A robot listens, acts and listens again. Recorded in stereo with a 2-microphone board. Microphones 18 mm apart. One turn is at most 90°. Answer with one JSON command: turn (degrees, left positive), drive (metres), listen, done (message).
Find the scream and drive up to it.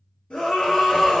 {"turn": 70}
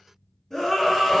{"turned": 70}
{"turn": 20}
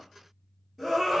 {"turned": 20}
{"drive": 1.0}
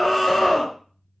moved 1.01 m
{"drive": 1.0}
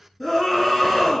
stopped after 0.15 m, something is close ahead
{"done": "Arrived at the scream, straight ahead."}